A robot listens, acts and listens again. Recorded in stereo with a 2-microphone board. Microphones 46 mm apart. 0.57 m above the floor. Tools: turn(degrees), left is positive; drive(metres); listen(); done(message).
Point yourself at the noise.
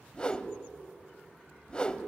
turn(degrees=20)
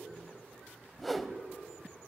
done("Facing the whoosh, under 1 m away.")